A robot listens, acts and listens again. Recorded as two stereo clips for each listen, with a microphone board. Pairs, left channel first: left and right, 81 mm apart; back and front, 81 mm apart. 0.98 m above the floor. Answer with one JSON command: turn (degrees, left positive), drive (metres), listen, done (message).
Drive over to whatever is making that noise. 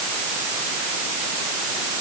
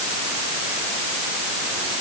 {"listen": true}
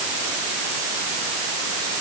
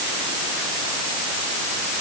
{"listen": true}
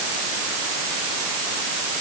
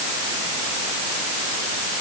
{"done": "I can't make out anything."}